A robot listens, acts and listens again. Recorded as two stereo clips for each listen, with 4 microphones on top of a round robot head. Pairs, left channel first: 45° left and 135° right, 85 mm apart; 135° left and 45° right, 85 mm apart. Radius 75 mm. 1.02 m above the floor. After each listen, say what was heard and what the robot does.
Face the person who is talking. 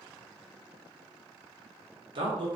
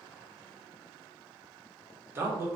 The man speaking: 105° right. Turn 105° right.
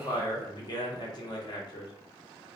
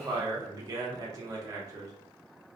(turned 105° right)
The man speaking is now 10° left. Turn 10° left.
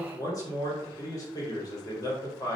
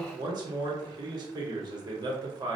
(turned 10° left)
Facing the man speaking, 1 to 2 m away.